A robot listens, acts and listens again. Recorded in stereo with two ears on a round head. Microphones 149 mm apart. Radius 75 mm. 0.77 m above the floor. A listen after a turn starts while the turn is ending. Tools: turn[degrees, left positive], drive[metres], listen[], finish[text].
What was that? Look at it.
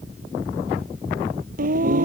Thought: The singing: about 55° right or 125° right.
Action: turn[-55]
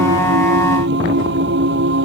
Thought: So it is at 75° right.
Action: turn[-75]
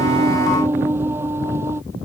Thought: The singing is now 15° right.
Action: turn[-15]
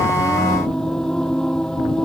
Action: finish[Found it: singing, straight ahead.]